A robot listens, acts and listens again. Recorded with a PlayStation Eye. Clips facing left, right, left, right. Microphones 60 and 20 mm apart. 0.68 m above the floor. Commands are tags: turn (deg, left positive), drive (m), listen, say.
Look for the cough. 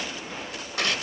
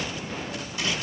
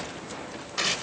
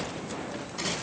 <listen/>
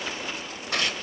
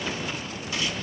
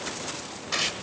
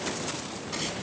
<listen/>
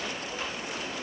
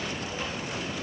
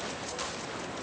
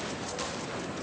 <say>I can't make out a cough to turn to.</say>